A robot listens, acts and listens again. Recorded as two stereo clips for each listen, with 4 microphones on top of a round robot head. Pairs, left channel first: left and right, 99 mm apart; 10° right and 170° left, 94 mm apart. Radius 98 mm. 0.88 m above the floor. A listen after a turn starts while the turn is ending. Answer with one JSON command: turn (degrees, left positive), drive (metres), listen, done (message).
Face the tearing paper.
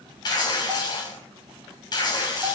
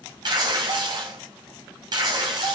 {"turn": 130}
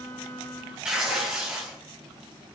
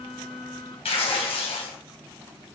{"turn": -10}
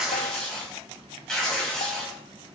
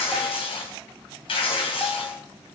{"done": "Found it: tearing paper, straight ahead, 2 to 4 m away."}